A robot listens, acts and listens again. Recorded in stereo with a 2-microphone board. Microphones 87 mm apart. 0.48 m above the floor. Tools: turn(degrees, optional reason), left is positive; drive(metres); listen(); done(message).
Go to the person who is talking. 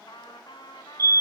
listen()
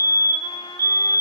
listen()
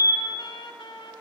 done("I can't make out anyone speaking, only a fire alarm and a trumpet.")